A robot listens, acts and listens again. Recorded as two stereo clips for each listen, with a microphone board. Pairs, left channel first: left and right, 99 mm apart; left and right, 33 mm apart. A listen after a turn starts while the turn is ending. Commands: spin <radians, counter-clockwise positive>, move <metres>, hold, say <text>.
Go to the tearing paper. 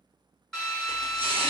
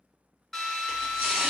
spin -1.57
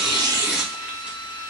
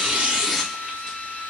spin -0.17
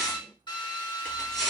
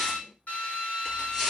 move 1.0
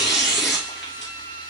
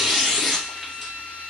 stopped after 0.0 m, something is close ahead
say Blocked. The tearing paper is further on, straight ahead.